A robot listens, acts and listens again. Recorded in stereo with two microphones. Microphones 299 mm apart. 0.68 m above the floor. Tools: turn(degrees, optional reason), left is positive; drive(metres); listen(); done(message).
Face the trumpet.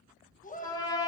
turn(degrees=30)
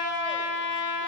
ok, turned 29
turn(degrees=135, reason="So it is at 135° left.")
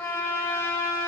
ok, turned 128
turn(degrees=10, reason="The trumpet is now 10° left.")
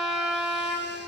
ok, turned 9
done("Facing the trumpet, under 1 m away.")